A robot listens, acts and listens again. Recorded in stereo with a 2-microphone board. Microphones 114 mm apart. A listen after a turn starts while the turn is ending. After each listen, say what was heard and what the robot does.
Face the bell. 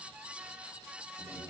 Keep listening.
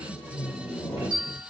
The bell: about 40° left or 140° left. Turn 40° left.
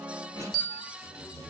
Facing the bell.